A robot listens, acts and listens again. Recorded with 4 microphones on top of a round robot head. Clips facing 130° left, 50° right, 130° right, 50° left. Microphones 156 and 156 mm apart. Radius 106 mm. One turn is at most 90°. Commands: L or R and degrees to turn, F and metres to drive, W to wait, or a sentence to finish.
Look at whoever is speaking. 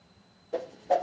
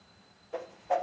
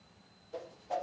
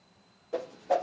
W
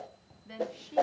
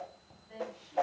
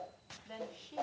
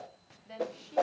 L90
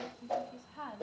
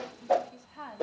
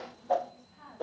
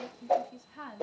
L35
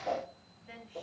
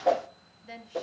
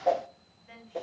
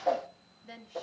Facing the woman speaking, 2 to 4 m away.